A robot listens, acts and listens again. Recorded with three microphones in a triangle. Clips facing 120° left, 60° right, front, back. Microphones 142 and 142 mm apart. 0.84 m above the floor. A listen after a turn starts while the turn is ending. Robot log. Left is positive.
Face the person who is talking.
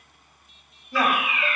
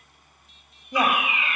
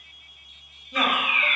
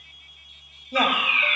note: The woman speaking: 130° right.
cmd yaw -130
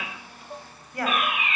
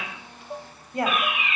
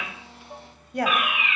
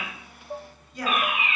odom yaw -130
end: Facing the woman speaking.